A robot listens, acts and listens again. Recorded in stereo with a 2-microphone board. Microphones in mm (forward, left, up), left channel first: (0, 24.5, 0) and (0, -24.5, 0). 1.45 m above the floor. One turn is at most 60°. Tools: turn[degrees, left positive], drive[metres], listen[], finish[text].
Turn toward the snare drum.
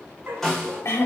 Action: turn[30]
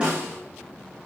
Thought: So it is at 25° right.
Action: turn[-25]
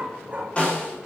Thought: The snare drum is now 25° left.
Action: turn[25]
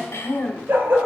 Action: listen[]
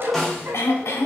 Action: finish[Facing the snare drum, 2 to 4 m away.]